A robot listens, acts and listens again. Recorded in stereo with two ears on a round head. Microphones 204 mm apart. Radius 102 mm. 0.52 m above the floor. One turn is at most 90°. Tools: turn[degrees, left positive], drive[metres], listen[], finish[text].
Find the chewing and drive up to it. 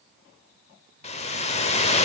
Action: listen[]
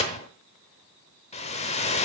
Action: listen[]
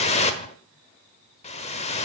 Action: finish[I can't make out chewing to turn to.]